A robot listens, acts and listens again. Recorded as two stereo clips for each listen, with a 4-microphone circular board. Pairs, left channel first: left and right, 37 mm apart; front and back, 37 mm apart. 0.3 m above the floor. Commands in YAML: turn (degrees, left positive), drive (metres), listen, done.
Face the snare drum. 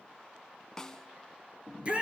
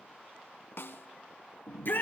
turn: 15
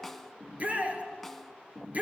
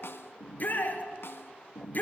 listen: true
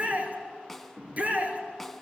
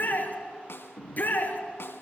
done: "Found it: a snare drum, straight ahead, under 1 m away."